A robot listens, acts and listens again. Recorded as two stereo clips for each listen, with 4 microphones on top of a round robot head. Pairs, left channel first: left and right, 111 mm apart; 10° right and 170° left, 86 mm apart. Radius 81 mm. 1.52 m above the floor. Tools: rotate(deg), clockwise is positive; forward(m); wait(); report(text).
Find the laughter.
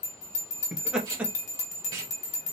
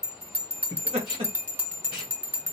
rotate(170)
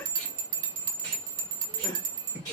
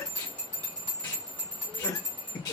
rotate(-40)
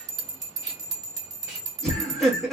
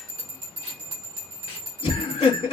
report("Facing the laughter.")